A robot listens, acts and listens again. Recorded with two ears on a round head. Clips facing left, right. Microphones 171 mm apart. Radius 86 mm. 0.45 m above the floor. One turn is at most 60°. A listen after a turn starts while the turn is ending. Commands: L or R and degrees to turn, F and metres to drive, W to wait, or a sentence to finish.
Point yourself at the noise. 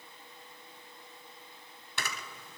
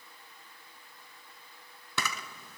R60
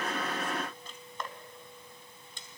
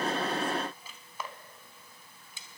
Found it: a camera shutter, straight ahead.